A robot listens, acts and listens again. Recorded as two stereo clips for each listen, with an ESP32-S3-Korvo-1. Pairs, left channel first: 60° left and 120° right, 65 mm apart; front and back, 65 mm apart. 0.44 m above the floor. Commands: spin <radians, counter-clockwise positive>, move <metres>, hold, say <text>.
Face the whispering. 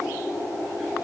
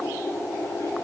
hold
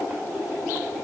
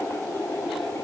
hold
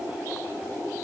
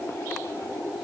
say I can't make out whispering.